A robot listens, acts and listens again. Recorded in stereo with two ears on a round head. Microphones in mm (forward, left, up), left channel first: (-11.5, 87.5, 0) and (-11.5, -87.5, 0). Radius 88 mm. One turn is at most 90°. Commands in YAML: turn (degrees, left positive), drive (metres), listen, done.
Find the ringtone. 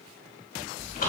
listen: true
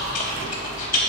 listen: true
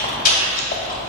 done: "I can't make out a ringtone, only chewing."